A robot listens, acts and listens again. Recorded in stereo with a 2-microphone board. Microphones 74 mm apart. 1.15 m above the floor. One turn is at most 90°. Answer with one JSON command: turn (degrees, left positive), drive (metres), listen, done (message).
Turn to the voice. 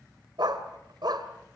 {"listen": true}
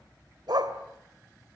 {"listen": true}
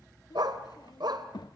{"turn": 70}
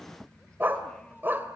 {"listen": true}
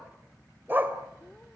{"listen": true}
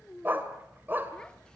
{"turn": 10}
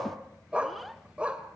{"done": "Found it: a child speaking, straight ahead."}